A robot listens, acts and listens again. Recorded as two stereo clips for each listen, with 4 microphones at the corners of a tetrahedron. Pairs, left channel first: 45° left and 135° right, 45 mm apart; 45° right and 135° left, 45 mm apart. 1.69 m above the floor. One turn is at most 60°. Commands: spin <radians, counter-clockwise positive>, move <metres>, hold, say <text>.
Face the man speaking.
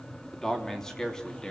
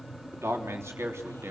spin 1.05
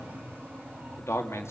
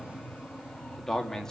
spin 0.61
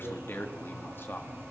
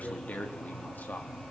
spin 0.17
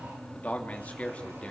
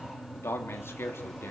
spin -0.35
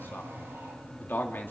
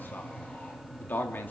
say Facing the man speaking, 2 to 4 m away.